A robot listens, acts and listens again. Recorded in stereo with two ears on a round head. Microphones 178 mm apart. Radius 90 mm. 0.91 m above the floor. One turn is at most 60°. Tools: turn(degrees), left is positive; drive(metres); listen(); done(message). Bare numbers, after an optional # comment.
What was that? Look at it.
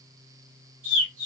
turn(-60)
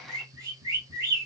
# So it is at 20° right.
turn(-20)
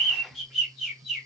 done("Found it: a bird, straight ahead, 2 to 4 m away.")